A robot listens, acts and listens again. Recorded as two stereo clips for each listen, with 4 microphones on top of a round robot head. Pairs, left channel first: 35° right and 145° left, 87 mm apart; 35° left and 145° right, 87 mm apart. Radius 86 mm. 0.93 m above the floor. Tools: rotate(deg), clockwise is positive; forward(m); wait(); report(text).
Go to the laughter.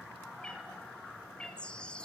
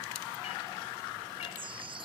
wait()
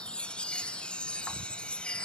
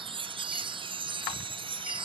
wait()
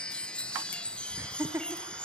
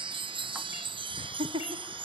rotate(155)
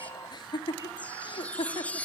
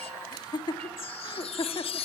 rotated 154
forward(1.0)
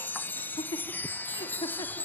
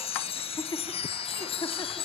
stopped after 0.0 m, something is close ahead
report("Blocked. The laughter is further on, straight ahead.")